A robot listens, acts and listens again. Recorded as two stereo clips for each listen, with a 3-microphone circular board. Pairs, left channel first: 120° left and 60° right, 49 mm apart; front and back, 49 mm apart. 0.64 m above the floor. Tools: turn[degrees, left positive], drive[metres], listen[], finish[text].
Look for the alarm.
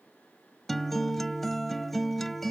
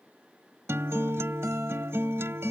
Action: listen[]
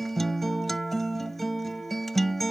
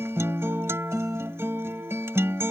Action: listen[]
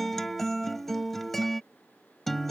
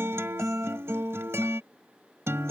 Action: finish[I can't make out an alarm to turn to.]